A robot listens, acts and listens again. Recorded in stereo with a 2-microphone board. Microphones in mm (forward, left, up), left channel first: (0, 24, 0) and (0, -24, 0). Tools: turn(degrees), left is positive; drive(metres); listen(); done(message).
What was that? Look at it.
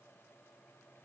listen()
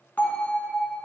turn(degrees=35)
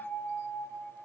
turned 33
turn(degrees=110)
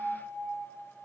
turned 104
turn(degrees=10)
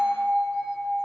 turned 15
done("Facing the bell, 1 to 2 m away.")